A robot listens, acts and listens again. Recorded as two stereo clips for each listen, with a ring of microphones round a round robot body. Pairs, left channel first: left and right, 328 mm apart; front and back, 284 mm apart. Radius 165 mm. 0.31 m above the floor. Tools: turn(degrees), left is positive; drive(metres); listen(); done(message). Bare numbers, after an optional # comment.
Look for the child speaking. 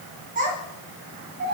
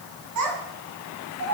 # The child speaking: 145° right.
turn(-145)
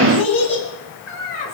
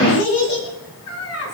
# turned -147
# The child speaking is now 30° left.
turn(30)
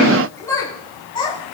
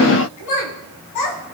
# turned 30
# The child speaking is now 15° left.
turn(15)
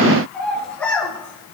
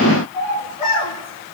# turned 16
# The child speaking is now 10° left.
turn(10)
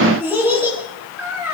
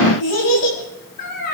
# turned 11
done("Found it: a child speaking, straight ahead.")